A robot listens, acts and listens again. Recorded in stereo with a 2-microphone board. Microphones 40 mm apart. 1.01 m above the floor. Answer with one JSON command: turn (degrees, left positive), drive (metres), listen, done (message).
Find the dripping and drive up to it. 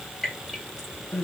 {"turn": 30}
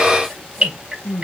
{"turn": -25}
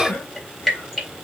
{"drive": 1.0}
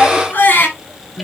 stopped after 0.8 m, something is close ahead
{"listen": true}
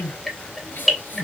{"done": "Something is in my way. I am facing the dripping but have not reached it."}